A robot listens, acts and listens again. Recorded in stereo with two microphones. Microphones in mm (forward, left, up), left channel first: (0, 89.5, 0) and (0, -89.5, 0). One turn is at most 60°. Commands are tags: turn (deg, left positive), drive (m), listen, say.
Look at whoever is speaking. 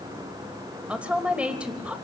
<turn deg="-30"/>
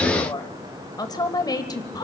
<turn deg="25"/>
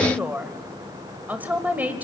<turn deg="-10"/>
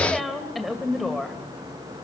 <say>Found it: a woman speaking, straight ahead.</say>